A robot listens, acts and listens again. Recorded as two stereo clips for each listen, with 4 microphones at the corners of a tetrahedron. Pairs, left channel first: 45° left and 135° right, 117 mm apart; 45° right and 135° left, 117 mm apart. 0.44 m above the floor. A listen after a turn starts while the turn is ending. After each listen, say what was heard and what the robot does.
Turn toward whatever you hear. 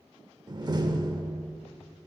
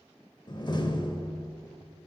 The door slam: 85° right. Turn 85° right.
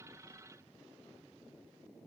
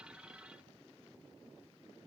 I heard a door slam from this way, but can't make it out now.